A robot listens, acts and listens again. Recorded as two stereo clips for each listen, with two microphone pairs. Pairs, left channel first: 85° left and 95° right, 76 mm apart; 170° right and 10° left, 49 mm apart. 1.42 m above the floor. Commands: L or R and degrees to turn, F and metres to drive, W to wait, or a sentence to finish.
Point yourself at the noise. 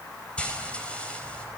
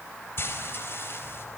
L155
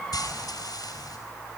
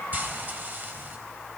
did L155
L60
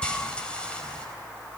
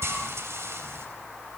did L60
L10
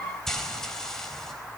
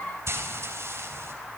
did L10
Found it: frying, straight ahead.